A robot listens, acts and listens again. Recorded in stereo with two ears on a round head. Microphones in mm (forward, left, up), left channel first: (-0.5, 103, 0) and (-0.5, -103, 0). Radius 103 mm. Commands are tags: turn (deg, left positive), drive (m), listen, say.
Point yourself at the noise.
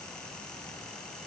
<listen/>
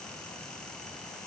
<listen/>
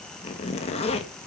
<turn deg="30"/>
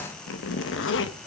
<turn deg="120"/>
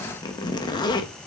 <turn deg="20"/>
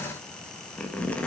<say>Facing the zipper.</say>